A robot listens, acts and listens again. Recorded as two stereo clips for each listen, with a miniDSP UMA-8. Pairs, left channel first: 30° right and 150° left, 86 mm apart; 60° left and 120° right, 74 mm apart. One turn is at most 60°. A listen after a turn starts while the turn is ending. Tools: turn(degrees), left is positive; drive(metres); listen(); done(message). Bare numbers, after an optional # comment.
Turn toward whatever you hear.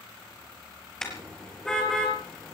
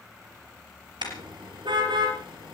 # The car horn: 115° right.
turn(-60)
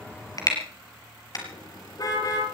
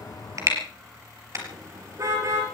# The car horn is now 75° right.
turn(-60)
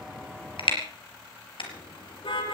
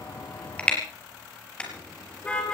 # The car horn is now 15° right.
turn(-15)
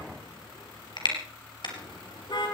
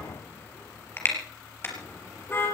done("Facing the car horn, over 4 m away.")